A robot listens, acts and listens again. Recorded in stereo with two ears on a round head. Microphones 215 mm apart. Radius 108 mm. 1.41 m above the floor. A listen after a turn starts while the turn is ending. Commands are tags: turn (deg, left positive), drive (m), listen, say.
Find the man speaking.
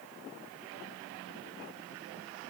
<listen/>
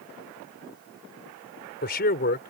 <turn deg="40"/>
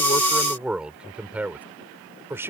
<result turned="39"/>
<turn deg="-10"/>
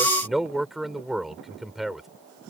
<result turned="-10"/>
<say>Found it: a man speaking, straight ahead.</say>